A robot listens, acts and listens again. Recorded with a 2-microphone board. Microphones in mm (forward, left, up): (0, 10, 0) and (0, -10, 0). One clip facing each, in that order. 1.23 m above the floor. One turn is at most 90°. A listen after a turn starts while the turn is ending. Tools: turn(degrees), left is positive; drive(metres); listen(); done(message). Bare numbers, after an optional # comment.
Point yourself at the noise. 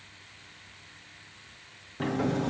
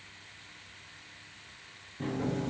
# The sliding door: about 55° left or 125° left.
turn(55)
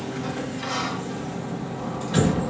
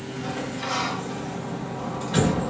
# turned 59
done("Found it: a sliding door, straight ahead, 1 to 2 m away.")